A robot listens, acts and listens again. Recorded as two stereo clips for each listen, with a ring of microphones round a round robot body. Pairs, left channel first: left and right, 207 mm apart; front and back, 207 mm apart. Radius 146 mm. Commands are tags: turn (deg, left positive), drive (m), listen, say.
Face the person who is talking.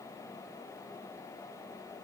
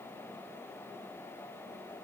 <listen/>
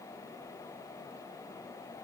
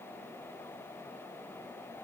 <listen/>
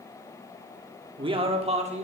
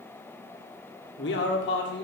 <turn deg="-35"/>
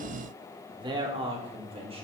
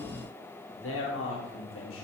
<turn deg="-30"/>
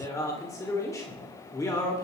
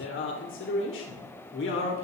<turn deg="15"/>
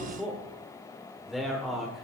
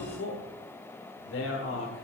<say>Facing the man speaking.</say>